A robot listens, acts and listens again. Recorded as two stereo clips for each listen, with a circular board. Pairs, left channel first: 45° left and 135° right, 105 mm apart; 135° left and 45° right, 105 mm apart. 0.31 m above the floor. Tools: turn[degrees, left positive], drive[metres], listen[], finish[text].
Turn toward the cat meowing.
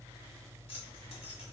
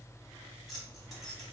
Action: listen[]
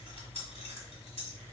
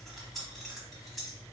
Action: listen[]
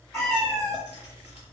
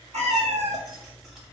Thought: The cat meowing: 30° right.
Action: turn[-30]
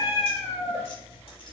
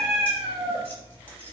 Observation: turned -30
Thought: The cat meowing is now 10° right.
Action: turn[-10]
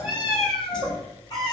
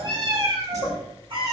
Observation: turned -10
Action: finish[Found it: a cat meowing, straight ahead, 1 to 2 m away.]